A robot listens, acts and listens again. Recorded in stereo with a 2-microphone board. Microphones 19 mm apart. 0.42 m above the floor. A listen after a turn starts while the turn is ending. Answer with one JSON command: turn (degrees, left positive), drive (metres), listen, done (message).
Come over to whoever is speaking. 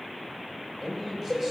{"turn": -30}
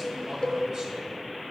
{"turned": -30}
{"listen": true}
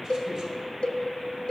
{"listen": true}
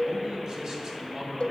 {"turn": -135}
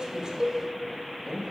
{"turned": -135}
{"turn": -15}
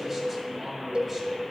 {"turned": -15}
{"drive": 1.0}
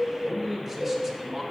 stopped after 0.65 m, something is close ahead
{"turn": -10}
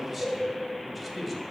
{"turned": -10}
{"done": "Arrived at the man speaking, straight ahead."}